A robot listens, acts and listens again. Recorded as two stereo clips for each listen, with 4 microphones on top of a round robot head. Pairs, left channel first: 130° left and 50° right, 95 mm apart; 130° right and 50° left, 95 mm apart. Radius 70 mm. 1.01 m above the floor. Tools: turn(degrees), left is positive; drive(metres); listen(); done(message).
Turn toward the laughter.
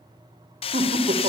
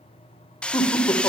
turn(degrees=-65)
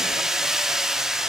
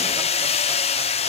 listen()
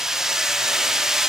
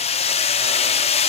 listen()
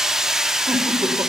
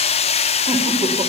done("Facing where the laughter came from. I can't hear it now.")